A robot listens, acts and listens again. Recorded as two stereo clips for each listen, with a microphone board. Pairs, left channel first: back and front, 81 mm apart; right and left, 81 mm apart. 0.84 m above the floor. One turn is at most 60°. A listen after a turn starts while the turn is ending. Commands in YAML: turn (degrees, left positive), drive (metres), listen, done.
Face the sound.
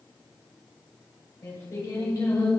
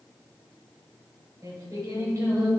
turn: 60
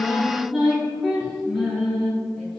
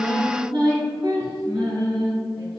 turn: 60
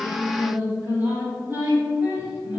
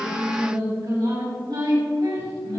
turn: 60
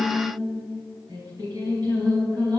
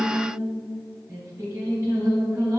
turn: 35
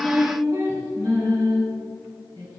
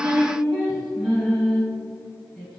done: "Found it: singing, straight ahead."